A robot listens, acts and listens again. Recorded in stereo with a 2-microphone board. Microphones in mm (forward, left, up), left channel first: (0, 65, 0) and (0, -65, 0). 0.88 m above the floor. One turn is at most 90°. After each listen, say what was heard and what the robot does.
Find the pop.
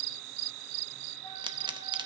The pop: about 35° right or 145° right. Turn 35° right.
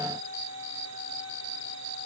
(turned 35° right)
Keep listening.
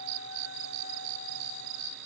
I heard a pop, but can't make it out now. It was about straight ahead or 110° right.